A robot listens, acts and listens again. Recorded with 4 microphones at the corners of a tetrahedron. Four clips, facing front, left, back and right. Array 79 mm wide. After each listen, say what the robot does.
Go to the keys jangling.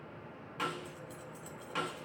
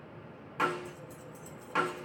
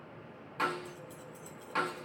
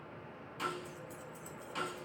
Turn 15° left.
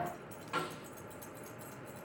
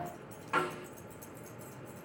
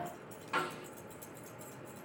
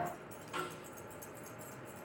Drive 1.0 m forward.
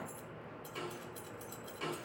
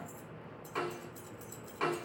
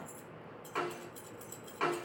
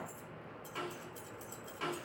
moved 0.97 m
Drive 1.0 m forward.
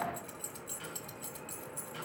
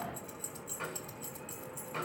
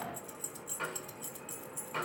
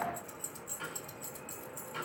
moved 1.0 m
Drive 1.0 m forward.
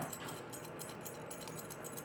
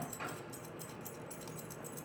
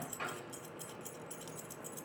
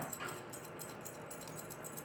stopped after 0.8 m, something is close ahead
Arrived at the keys jangling, straight ahead.